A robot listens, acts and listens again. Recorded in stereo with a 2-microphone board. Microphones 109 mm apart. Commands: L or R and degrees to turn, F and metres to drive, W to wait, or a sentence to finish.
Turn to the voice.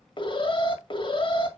W
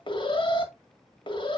W
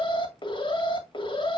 I can't make out anyone speaking to turn to.